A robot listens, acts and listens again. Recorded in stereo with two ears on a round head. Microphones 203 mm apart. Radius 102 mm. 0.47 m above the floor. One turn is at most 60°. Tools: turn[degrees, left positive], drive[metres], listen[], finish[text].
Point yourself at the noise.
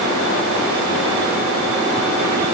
Action: listen[]
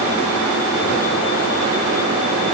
Action: listen[]
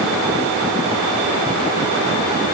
Action: finish[I can't make out anything.]